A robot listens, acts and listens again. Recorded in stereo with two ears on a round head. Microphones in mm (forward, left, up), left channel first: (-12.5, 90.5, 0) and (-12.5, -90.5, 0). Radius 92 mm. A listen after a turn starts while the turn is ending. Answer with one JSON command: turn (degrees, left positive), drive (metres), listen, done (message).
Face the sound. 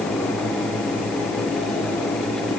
{"listen": true}
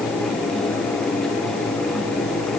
{"listen": true}
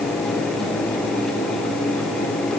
{"done": "I can't make out anything to turn to."}